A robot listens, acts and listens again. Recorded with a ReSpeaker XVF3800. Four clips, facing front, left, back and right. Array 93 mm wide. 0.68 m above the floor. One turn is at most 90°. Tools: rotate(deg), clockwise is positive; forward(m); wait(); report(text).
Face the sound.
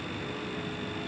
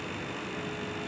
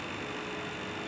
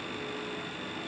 wait()
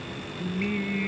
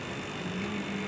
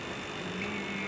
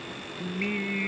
rotate(55)
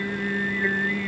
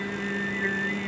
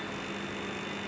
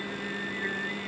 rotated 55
rotate(-15)
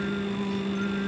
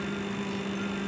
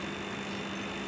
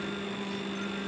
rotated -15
report("Found it: singing, straight ahead.")